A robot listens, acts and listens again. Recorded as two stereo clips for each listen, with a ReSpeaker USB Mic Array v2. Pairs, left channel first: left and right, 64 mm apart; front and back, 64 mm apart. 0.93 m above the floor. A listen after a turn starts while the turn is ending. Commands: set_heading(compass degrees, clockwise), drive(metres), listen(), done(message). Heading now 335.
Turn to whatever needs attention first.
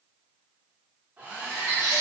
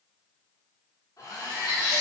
set_heading(65)
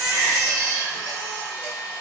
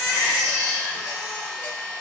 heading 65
set_heading(55)
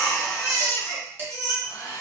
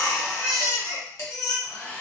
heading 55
done("Facing the baby crying.")